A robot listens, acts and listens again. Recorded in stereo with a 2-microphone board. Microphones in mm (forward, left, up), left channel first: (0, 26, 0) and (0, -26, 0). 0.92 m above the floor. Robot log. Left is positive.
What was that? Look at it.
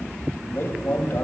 note: The man speaking: about 40° left or 140° left.
cmd yaw +40
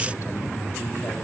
cmd idle
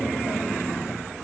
cmd idle
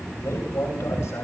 note: So it is at 100° left.
cmd yaw +100
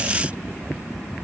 cmd idle
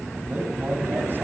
note: The man speaking is now 35° right.
cmd yaw -35
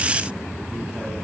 cmd idle
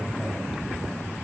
cmd idle
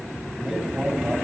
end: Facing the man speaking.